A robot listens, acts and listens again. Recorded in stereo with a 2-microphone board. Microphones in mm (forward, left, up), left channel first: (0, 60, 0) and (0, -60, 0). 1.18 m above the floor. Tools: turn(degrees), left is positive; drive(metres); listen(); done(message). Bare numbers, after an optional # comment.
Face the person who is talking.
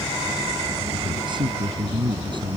# The man speaking: about 40° right or 140° right.
turn(-40)
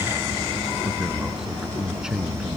done("Found it: a man speaking, straight ahead.")